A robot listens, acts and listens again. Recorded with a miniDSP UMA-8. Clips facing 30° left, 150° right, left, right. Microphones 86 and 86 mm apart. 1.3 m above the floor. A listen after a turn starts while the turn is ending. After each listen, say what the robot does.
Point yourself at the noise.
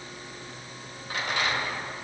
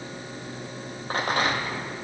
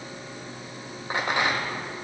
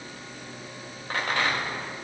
Turn 165° left.
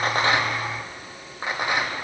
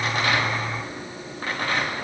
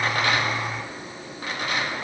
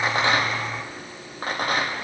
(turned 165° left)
Turn 45° right.
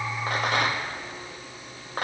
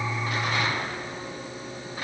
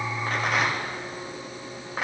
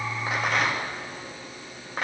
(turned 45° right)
Facing the rattle, 1 to 2 m away.